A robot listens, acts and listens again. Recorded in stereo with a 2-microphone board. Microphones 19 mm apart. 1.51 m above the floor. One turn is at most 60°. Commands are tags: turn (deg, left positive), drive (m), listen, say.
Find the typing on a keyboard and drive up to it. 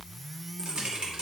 <turn deg="-60"/>
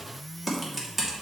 <turn deg="-10"/>
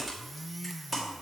<drive m="1.0"/>
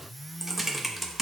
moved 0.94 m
<turn deg="-15"/>
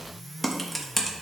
<drive m="1.0"/>
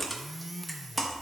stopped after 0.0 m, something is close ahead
<say>Arrived at the typing on a keyboard, straight ahead.</say>